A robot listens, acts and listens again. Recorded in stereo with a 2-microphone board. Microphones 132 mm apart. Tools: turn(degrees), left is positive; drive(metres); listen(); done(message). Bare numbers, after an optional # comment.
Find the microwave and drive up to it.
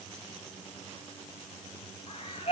listen()
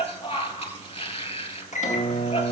# The microwave: about 65° left or 115° left.
turn(65)
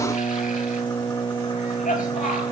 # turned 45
# So it is at 20° left.
turn(20)
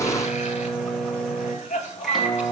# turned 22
drive(1.0)
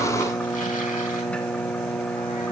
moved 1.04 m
# The microwave is now 10° left.
turn(10)
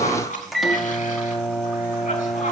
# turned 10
drive(1.0)
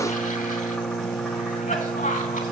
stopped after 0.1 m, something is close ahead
done("I am next to the microwave.")